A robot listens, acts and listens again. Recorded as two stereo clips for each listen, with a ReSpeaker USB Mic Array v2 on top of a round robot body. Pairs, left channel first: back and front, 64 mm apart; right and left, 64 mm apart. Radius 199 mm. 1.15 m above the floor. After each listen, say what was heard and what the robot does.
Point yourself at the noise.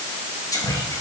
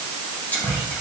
The whispering: 155° right. Turn 155° right.
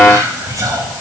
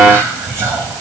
The whispering is now 40° left. Turn 40° left.
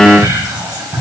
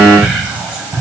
The whispering is now 20° left. Turn 20° left.
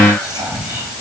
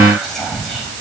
Found it: whispering, straight ahead.